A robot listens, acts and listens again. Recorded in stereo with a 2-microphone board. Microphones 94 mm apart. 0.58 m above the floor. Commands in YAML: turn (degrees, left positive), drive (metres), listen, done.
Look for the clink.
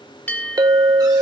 turn: -45
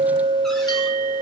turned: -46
turn: -90
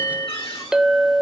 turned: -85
done: "Facing the clink."